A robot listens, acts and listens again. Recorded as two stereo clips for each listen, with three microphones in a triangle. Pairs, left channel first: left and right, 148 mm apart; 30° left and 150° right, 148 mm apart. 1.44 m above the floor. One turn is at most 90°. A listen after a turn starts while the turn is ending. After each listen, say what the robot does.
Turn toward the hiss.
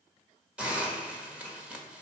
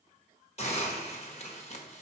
Turn 10° right.
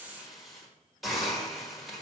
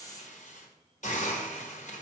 Found it: a hiss, straight ahead, 1 to 2 m away.